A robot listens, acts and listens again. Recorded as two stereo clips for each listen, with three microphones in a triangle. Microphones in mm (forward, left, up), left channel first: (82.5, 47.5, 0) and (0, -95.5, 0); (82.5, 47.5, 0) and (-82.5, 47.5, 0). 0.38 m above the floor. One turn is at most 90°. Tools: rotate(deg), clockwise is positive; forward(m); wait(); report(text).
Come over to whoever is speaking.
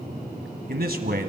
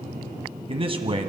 rotate(90)
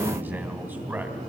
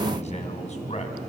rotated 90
rotate(40)
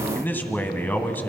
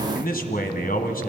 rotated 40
rotate(15)
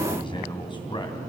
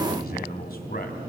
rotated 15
forward(1.0)
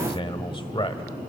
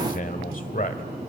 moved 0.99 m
rotate(-10)
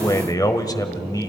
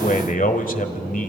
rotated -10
forward(1.0)
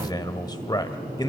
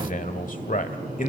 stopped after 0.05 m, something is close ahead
report("Arrived at the man speaking, straight ahead.")